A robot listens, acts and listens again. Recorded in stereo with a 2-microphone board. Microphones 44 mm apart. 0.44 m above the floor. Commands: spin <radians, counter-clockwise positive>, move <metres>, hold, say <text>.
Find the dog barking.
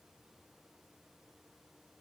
hold
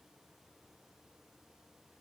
hold
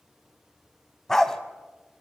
spin 0.52
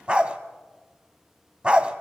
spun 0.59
spin -0.52
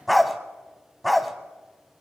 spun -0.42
say Facing the dog barking, 1 to 2 m away.